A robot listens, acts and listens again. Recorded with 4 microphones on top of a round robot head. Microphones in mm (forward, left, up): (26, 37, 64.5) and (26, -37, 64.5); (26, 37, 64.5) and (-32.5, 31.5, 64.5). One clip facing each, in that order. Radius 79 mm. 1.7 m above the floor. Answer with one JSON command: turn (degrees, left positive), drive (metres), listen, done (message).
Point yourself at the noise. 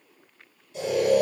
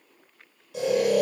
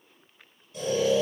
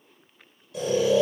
{"turn": -130}
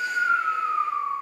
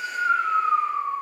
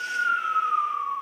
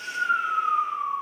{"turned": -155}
{"turn": 20}
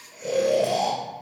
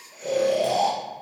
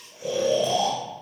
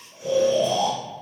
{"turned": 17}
{"done": "Found it: snoring, straight ahead, 1 to 2 m away."}